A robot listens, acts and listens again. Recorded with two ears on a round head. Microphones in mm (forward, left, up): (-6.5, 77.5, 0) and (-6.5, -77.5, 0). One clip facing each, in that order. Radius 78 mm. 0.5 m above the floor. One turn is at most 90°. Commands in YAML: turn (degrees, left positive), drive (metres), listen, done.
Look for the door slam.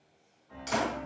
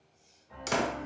turn: -60
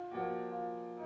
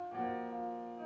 listen: true
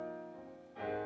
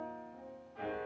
done: "I heard a door slam, but can't make it out now. It was about straight ahead or 60° right."